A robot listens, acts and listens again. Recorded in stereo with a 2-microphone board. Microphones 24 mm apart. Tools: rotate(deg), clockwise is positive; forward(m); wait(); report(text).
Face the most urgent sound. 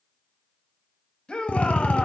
rotate(-45)
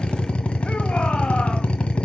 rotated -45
wait()
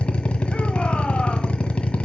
wait()
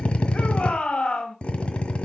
rotate(-85)
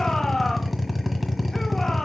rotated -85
rotate(-25)
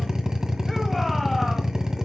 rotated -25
wait()
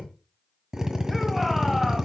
wait()
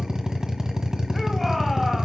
report("Facing the shout, 2 to 4 m away.")